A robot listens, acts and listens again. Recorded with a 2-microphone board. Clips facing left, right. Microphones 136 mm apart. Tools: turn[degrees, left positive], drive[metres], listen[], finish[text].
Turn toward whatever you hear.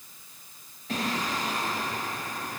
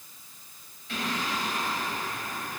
Thought: The singing: about 40° left or 140° left.
Action: turn[40]
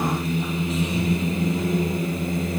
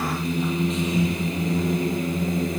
Action: finish[Found it: singing, straight ahead.]